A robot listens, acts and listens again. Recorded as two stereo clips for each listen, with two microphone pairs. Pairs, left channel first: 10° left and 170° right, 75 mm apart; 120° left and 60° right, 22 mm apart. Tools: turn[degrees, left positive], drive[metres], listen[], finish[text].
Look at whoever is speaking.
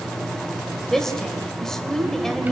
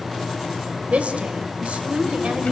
Thought: The woman speaking: 75° right.
Action: turn[-75]
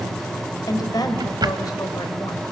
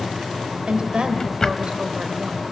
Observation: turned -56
Thought: The woman speaking is now 15° right.
Action: turn[-15]
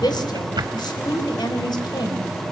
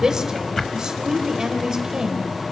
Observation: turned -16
Action: finish[Found it: a woman speaking, straight ahead.]